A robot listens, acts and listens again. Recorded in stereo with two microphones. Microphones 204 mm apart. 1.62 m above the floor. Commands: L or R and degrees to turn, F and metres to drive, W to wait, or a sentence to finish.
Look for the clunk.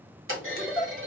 R90
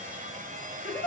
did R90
I heard a clunk from this way, but can't make it out now.